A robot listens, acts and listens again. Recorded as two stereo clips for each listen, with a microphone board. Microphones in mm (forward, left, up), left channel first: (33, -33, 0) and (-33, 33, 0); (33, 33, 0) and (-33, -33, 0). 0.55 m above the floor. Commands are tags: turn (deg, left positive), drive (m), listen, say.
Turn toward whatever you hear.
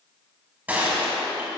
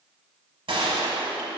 <turn deg="-155"/>
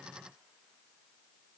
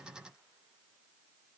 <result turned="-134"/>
<turn deg="-20"/>
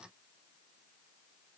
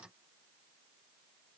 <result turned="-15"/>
<say>Facing where the gunshot came from. I can't hear it now.</say>